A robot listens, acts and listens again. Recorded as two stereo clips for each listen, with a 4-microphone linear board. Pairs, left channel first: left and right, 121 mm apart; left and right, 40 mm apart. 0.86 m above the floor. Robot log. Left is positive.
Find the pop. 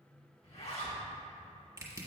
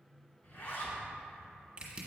cmd idle
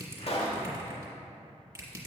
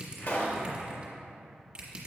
note: The pop: about 55° left or 125° left.
cmd yaw +55
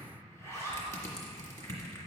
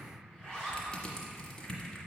cmd idle
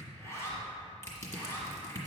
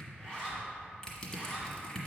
end: I heard a pop, but can't make it out now. It was about straight ahead or 70° left.